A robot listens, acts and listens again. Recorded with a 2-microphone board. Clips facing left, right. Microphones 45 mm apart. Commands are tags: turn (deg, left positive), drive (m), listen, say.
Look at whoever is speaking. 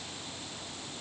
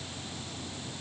<listen/>
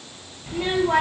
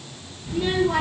<turn deg="45"/>
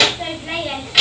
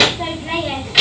<say>Found it: a child speaking, straight ahead, under 1 m away.</say>